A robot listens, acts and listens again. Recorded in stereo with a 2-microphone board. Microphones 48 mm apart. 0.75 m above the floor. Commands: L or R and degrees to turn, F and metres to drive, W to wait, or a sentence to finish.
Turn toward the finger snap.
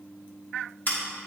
W
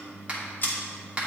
R25
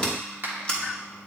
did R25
R130
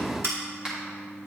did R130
R15
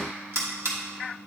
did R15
W
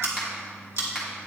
R10
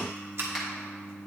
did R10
W
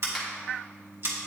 W
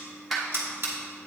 Facing where the finger snap came from. I can't hear it now.